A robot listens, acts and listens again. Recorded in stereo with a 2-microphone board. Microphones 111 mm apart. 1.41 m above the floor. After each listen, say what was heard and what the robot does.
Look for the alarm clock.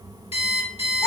The alarm clock: about 60° left or 120° left. Turn 60° left.
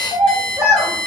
Found it: an alarm clock, straight ahead.